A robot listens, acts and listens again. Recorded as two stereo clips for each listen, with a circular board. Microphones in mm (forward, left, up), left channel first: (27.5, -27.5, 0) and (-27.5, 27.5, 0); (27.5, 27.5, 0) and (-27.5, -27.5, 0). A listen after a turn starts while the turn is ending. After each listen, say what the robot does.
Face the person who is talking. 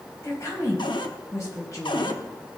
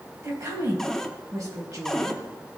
Turn 95° right.
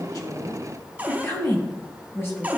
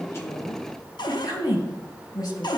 Turn 10° left.
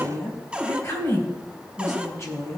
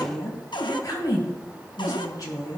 Found it: a woman speaking, straight ahead.